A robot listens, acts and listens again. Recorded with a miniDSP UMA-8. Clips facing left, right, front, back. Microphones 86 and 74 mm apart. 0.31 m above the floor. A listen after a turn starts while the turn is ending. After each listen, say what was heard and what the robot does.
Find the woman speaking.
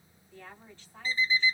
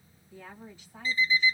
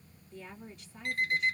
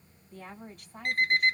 The woman speaking: 165° right. Turn 165° right.
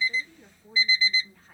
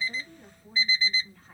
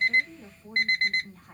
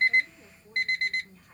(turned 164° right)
Facing the woman speaking, 1 to 2 m away.